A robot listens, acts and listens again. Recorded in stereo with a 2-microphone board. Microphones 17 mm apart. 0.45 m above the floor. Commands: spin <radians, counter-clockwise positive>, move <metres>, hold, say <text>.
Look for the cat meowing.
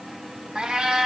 spin -1.22
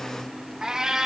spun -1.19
spin -0.70
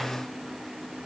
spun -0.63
hold
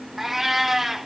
say Found it: a cat meowing, straight ahead, 1 to 2 m away.